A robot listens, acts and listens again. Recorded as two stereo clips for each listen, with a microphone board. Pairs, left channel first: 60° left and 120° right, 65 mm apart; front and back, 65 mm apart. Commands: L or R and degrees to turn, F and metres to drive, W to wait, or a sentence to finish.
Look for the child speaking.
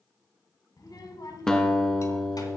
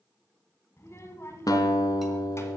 L45
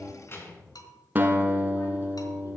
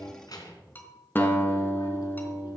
L10
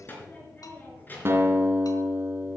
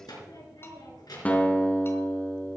Facing the child speaking, 2 to 4 m away.